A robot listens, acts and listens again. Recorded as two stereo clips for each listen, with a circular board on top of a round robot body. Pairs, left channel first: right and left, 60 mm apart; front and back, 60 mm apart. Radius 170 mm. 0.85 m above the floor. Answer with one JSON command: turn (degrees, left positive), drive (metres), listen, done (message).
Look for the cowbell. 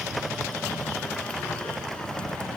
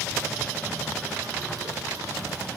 {"listen": true}
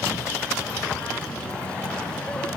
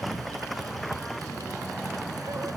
{"listen": true}
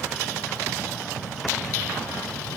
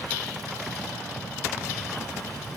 {"done": "I can't make out a cowbell to turn to."}